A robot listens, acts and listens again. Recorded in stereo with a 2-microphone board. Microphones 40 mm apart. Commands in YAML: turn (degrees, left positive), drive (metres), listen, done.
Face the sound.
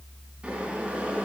turn: -30
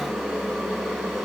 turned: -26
done: "Found it: boiling, straight ahead, 2 to 4 m away."